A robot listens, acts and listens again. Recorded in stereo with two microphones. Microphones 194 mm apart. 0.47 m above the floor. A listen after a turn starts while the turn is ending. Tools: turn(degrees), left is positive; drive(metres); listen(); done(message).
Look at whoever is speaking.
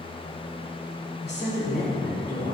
turn(degrees=55)
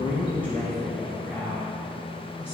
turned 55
done("Facing the woman speaking.")